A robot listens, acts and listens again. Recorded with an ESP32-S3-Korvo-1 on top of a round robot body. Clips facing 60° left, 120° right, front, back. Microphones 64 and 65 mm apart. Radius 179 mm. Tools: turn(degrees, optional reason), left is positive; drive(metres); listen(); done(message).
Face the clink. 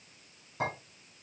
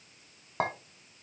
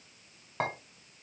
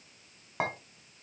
turn(degrees=-95, reason="The clink: 95° right.")
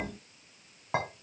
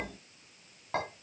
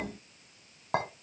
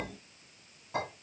turn(degrees=-15, reason="The clink is now 15° right.")
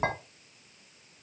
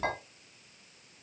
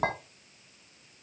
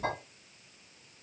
done("Found it: a clink, straight ahead.")